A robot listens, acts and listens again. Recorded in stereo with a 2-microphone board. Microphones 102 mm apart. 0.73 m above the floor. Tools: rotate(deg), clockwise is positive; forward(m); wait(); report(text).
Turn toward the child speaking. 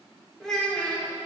rotate(-30)
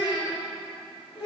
rotate(-115)
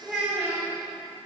rotate(15)
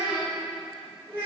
rotate(20)
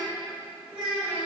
rotate(10)
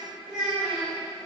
report("Facing the child speaking, 2 to 4 m away.")